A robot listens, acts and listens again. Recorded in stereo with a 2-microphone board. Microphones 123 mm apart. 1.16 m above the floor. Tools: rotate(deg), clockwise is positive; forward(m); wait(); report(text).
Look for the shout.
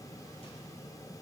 wait()
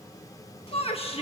rotate(-55)
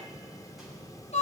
rotate(-70)
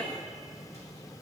report("Facing the shout, 1 to 2 m away.")